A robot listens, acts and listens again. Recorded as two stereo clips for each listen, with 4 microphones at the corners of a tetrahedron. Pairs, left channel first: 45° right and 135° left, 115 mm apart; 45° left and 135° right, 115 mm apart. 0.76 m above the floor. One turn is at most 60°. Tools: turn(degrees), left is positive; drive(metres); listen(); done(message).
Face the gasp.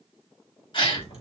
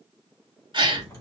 turn(degrees=-60)
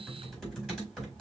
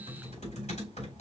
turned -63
turn(degrees=-25)
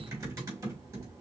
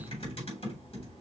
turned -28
done("I heard a gasp from this way, but can't make it out now.")